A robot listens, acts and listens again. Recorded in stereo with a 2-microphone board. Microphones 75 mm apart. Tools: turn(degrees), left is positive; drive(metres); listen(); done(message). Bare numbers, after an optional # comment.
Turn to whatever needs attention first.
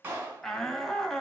turn(30)
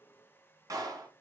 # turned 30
listen()
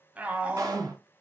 # So it is at 20° right.
turn(-20)
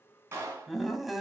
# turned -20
done("Facing the shout.")